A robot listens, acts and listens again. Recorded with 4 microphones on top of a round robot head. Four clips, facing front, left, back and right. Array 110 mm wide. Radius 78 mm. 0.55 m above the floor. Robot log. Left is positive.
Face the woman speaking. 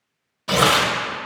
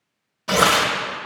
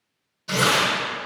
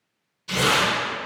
cmd idle
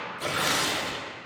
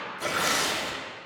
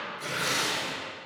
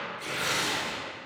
cmd idle
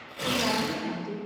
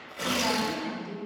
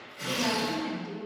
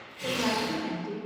note: The woman speaking: 50° right.
cmd yaw -50
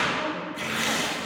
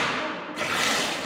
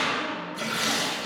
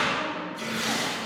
cmd idle
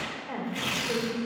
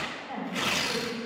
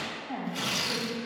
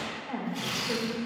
note: The woman speaking is now 25° right.
cmd yaw -25
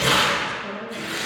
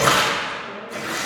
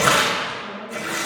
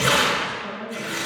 cmd idle
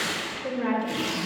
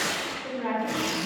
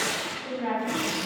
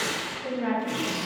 end: Facing the woman speaking.